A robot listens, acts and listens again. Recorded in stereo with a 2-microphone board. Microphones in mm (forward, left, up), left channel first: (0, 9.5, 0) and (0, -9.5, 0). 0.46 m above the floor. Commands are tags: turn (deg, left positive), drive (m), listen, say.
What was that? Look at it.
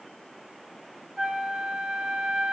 <turn deg="-30"/>
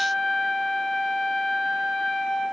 <say>Found it: a flute, straight ahead.</say>